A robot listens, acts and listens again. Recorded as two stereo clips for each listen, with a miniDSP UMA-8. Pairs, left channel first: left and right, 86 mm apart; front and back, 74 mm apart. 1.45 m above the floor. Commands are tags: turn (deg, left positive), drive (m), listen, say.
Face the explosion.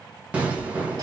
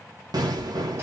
<turn deg="-165"/>
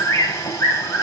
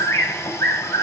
<say>Facing where the explosion came from. I can't hear it now.</say>